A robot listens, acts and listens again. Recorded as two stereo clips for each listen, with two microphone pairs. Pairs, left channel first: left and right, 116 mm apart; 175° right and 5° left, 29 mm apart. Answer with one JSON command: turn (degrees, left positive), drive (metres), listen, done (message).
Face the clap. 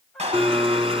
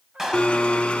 {"turn": -75}
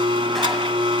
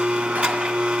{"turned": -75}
{"listen": true}
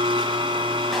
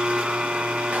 {"listen": true}
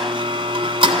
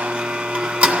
{"done": "Facing where the clap came from. I can't hear it now."}